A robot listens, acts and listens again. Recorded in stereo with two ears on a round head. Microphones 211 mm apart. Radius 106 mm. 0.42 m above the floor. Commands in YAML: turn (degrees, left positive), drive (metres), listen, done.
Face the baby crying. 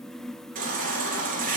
turn: -35
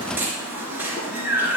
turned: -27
turn: -10
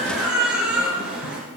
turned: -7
done: "Found it: a baby crying, straight ahead."